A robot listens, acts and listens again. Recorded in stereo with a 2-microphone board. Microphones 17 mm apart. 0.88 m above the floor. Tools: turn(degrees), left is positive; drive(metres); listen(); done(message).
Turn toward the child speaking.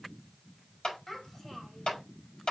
turn(degrees=20)
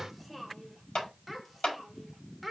done("Found it: a child speaking, straight ahead.")